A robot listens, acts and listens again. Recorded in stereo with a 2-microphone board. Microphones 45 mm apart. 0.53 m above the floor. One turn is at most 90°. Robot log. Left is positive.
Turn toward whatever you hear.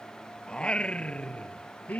note: The singing: about 35° left or 145° left.
cmd yaw +35
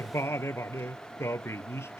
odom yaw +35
note: So it is at 100° left.
cmd yaw +90
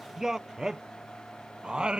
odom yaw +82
note: The singing is now 20° right.
cmd yaw -20
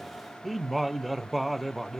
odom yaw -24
end: Found it: singing, straight ahead.